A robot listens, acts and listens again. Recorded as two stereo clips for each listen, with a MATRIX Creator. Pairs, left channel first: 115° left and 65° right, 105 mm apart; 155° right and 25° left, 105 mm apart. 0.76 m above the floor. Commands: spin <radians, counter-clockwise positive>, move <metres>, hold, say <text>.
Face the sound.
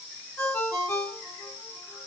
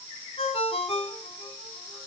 spin 3.14
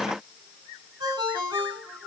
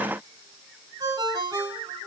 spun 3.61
spin -0.52
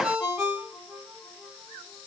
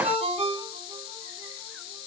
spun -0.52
say Found it: a ringtone, straight ahead.